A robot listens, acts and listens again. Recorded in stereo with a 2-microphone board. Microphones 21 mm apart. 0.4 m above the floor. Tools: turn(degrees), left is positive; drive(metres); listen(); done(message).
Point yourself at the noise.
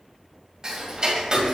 turn(degrees=-35)
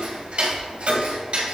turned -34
turn(degrees=-105)
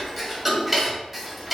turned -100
done("Found it: ticking, straight ahead.")